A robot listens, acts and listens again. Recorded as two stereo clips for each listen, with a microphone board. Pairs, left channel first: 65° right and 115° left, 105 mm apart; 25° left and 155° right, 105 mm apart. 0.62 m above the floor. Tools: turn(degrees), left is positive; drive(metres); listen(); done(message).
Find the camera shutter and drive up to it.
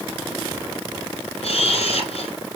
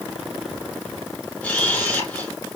turn(degrees=-50)
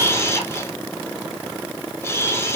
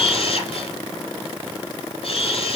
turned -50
drive(metres=1.0)
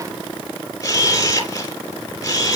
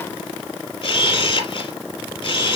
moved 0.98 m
turn(degrees=-10)
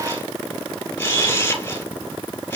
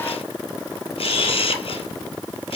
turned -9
drive(metres=1.0)
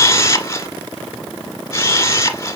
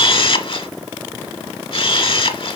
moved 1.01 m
drive(metres=1.0)
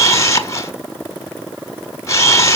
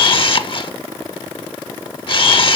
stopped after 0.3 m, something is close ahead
turn(degrees=-10)
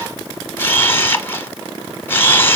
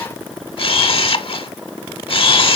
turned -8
done("I am next to the camera shutter.")